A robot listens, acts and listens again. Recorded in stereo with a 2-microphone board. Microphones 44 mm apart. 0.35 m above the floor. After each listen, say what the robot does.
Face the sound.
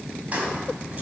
Turn 35° right.
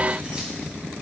Keep listening.
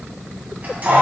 Turn 40° right.
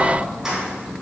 Turn 15° right.
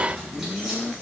Keep listening.
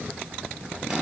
Keep listening.
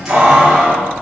Turn 20° right.
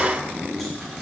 Keep listening.
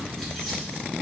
Keep listening.
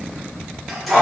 Facing the keys jangling.